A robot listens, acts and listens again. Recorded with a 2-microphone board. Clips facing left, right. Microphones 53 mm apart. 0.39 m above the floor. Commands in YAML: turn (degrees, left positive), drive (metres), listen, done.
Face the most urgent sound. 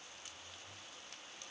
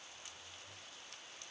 listen: true
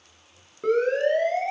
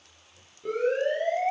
turn: 70
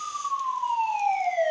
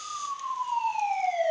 turn: 45
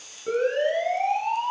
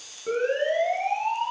done: "Facing the siren, over 4 m away."